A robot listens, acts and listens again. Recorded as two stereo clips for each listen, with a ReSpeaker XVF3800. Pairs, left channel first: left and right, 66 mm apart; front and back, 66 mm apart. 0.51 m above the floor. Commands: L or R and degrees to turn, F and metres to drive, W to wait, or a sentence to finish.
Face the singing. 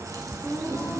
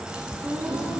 R160
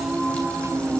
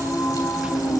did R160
R15
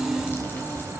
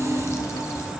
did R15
L15
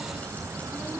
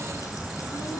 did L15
W
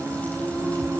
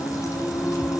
L15
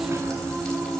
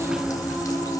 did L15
Facing the singing.